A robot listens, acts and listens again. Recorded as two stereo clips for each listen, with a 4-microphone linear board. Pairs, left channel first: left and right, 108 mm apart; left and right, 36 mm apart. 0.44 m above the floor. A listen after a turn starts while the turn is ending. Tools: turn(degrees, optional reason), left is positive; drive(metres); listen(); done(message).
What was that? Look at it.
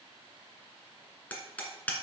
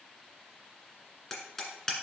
turn(degrees=30)
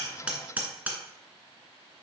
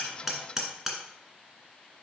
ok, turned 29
turn(degrees=-15, reason="So it is at 15° right.")
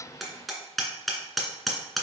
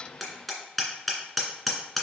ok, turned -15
done("Found it: hammering, straight ahead, 1 to 2 m away.")